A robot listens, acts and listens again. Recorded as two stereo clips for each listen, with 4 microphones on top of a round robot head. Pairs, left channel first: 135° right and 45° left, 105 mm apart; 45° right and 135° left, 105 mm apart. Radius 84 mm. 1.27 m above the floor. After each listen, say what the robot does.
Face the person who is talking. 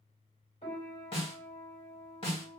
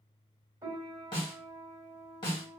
Keep listening.
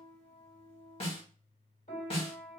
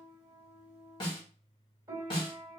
Keep listening.
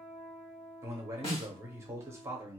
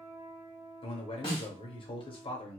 Turn 15° right.
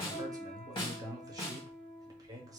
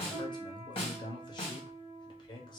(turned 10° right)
Found it: a man speaking, straight ahead.